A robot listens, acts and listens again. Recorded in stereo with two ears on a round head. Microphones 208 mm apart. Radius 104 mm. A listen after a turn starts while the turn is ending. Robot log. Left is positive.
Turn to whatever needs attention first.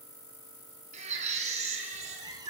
note: The baby crying: about 30° right or 150° right.
cmd yaw -30
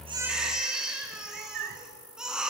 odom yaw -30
end: Facing the baby crying.